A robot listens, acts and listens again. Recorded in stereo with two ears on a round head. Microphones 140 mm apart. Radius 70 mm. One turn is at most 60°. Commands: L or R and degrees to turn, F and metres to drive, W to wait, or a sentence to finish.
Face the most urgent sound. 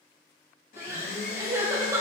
R15
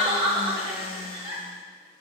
R60
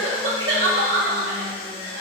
R60
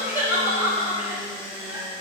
R15
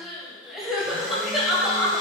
Found it: crying, straight ahead.